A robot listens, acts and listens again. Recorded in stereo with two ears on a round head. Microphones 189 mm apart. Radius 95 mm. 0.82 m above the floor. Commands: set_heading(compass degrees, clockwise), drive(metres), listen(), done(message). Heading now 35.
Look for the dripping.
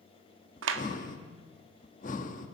listen()
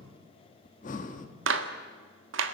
listen()
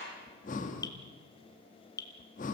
set_heading(15)
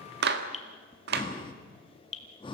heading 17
set_heading(232)
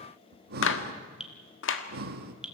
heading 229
done("Found it: dripping, straight ahead, 1 to 2 m away.")